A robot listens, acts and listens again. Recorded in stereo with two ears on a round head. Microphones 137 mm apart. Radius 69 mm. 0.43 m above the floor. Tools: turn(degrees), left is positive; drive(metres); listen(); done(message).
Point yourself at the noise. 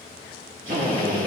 turn(degrees=-60)
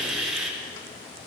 done("Found it: a drill, straight ahead.")